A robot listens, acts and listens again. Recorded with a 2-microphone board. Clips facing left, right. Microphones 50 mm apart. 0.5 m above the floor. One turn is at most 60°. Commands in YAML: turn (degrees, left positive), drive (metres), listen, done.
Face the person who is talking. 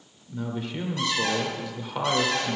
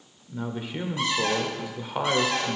turn: -30
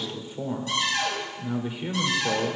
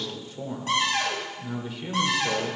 turn: 20
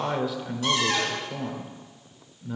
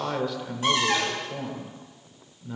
done: "Facing the man speaking."